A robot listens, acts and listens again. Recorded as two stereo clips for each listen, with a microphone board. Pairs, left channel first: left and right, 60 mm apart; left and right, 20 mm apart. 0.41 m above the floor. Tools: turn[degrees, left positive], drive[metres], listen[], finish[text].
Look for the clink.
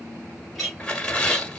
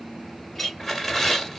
Action: turn[30]
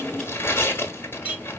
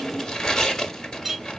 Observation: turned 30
Thought: So it is at 20° right.
Action: turn[-20]
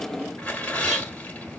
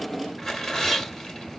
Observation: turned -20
Action: listen[]
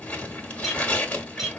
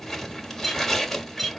Action: finish[Facing the clink, 2 to 4 m away.]